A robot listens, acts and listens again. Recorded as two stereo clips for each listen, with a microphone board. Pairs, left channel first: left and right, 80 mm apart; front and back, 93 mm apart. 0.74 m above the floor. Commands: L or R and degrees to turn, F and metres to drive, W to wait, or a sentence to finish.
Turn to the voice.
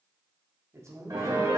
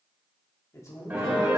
R50
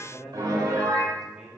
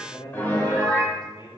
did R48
Facing the man speaking.